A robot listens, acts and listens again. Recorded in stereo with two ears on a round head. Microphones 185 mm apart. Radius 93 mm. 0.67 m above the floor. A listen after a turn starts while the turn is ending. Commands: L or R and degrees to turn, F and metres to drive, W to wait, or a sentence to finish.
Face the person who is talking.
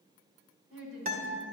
R65
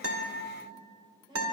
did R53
R20
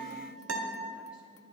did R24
W
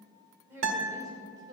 R20
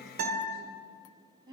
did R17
R20
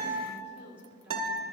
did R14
Found it: a woman speaking, straight ahead, 2 to 4 m away.